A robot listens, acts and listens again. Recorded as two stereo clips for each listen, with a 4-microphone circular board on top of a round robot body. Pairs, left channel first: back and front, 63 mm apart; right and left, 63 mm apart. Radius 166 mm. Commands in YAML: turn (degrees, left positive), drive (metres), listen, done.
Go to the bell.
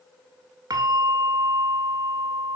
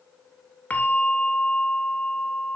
turn: -25
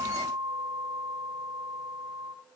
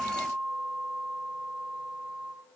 turn: 15
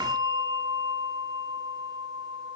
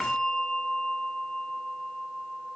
drive: 1.0
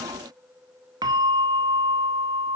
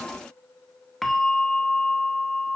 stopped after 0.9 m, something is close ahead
done: "Arrived at the bell, straight ahead."